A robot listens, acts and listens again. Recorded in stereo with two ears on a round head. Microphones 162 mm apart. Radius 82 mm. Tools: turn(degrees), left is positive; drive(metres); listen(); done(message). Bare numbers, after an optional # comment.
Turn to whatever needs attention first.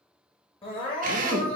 # The crying: about 30° left or 150° left.
turn(30)
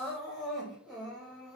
done("Found it: crying, straight ahead.")